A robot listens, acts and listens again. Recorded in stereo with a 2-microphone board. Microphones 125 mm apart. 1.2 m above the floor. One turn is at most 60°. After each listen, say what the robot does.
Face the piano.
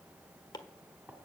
Keep listening.
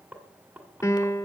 Turn 25° left.
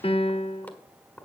Turn 60° left.
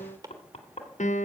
Turn 60° left.
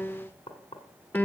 Turn 15° left.
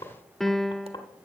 Found it: a piano, straight ahead, under 1 m away.